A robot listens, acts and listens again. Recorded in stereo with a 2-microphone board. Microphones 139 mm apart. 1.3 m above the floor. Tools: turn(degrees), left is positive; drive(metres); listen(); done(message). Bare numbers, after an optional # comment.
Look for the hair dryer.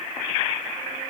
listen()
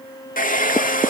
turn(90)
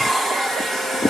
done("Facing the hair dryer, 1 to 2 m away.")